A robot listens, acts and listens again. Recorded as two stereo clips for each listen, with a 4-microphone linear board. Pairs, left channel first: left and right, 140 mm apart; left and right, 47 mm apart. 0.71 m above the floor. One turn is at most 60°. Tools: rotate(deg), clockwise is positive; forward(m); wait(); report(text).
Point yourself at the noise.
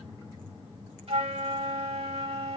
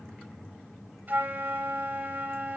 rotate(45)
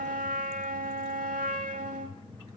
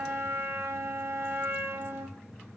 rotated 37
rotate(60)
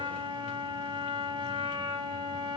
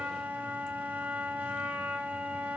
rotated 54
rotate(40)
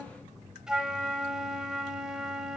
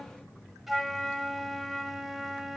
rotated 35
report("Facing the flute.")